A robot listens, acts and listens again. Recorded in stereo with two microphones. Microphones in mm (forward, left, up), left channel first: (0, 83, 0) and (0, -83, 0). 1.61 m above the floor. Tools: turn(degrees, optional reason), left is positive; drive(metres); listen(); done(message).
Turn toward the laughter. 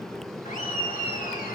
turn(degrees=60, reason="The laughter: about 60° left or 120° left.")
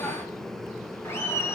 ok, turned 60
turn(degrees=15, reason="So it is at 15° left.")
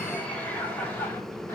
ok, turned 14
turn(degrees=10, reason="The laughter is now 10° left.")
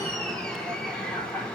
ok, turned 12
turn(degrees=10, reason="The laughter is now 10° left.")
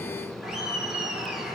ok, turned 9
done("Found it: laughter, straight ahead.")